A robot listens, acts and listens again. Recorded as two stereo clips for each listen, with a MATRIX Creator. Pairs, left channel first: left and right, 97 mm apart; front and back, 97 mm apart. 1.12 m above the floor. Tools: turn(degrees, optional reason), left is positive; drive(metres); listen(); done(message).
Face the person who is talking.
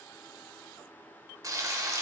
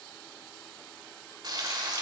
listen()
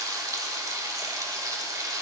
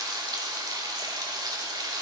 listen()
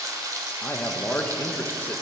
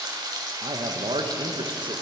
turn(degrees=160, reason="The man speaking: 160° left.")
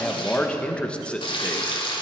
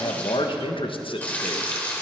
turn(degrees=10, reason="The man speaking is now 10° left.")
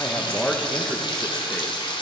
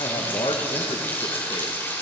done("Found it: a man speaking, straight ahead.")